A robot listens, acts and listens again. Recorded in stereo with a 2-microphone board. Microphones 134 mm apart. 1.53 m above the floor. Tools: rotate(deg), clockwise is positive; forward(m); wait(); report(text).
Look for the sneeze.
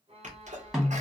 rotate(70)
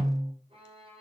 wait()
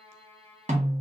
report("I heard a sneeze, but can't make it out now. It was about straight ahead or 40° right.")